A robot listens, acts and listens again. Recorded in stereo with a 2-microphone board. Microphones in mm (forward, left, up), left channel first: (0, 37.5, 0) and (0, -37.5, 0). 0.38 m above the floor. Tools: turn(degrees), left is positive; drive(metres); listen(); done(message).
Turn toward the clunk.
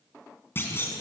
turn(degrees=30)
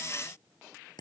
listen()
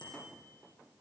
done("I heard a clunk, but can't make it out now. It was about straight ahead or 120° left.")